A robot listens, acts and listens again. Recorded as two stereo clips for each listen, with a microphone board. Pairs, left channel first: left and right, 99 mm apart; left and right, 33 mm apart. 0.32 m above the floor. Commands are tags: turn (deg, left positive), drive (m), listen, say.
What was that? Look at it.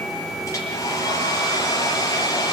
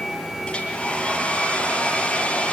<turn deg="35"/>
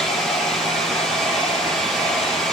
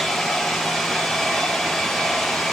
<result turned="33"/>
<say>Facing the hair dryer.</say>